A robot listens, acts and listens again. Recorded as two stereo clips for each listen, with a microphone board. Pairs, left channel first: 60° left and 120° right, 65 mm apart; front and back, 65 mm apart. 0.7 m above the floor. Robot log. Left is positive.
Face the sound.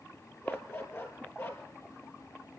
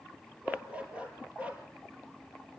note: The dog barking: 110° left.
cmd yaw +110
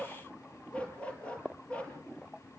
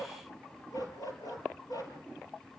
note: The dog barking is now 15° right.
cmd yaw -15
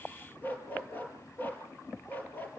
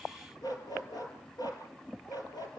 end: Found it: a dog barking, straight ahead, over 4 m away.